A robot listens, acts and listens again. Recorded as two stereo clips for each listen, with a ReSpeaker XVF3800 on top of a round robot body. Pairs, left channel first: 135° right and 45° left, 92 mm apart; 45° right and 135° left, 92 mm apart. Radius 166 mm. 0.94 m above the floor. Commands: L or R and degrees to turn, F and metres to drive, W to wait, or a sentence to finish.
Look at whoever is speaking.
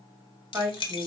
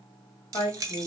R25
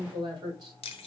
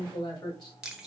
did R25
Facing the woman speaking.